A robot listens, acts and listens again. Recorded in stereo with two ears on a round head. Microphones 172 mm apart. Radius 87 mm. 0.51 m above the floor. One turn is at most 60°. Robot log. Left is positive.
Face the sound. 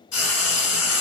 cmd yaw +60
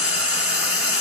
note: So it is at 20° left.
cmd yaw +20
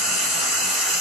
end: Found it: frying, straight ahead.